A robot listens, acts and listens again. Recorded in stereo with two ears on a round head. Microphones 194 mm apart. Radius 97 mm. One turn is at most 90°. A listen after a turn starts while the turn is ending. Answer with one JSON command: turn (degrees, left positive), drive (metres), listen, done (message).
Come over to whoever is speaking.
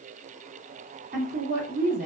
{"turn": -40}
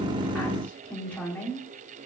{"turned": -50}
{"drive": 1.0}
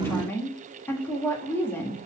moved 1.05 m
{"turn": 10}
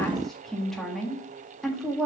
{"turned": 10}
{"drive": 1.0}
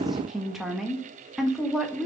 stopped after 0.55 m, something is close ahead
{"done": "I am next to the woman speaking."}